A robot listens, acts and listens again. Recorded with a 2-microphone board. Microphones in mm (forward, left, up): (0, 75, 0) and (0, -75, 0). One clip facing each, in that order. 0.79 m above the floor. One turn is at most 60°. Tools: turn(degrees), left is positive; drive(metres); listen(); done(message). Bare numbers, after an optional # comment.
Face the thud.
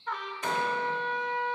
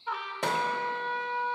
# The thud: about 75° right or 105° right.
turn(-60)
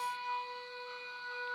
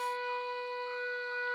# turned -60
listen()
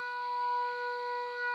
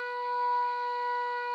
done("I heard a thud, but can't make it out now. It was about 15° right or 45° right.")